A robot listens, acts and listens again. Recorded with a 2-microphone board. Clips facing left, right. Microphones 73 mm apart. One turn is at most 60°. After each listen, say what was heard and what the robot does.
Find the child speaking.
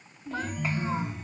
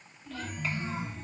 The child speaking: about 20° left or 160° left. Turn 20° left.
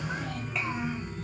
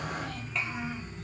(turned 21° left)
Found it: a child speaking, straight ahead.